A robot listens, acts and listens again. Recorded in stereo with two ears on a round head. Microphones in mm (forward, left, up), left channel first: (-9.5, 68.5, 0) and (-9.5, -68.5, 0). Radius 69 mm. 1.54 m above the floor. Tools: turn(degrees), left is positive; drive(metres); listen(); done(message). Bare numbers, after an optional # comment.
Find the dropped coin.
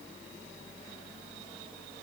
listen()
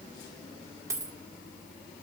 # The dropped coin: about 20° right or 160° right.
turn(-20)
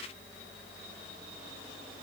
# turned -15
listen()
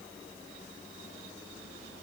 done("I heard a dropped coin, but can't make it out now. It was about 5° right or 145° right.")